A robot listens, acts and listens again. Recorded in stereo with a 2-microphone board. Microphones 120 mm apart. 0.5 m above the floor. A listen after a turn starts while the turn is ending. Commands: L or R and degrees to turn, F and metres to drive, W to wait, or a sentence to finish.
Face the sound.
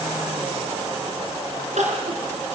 R90
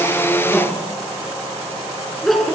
Found it: crying, straight ahead, over 4 m away.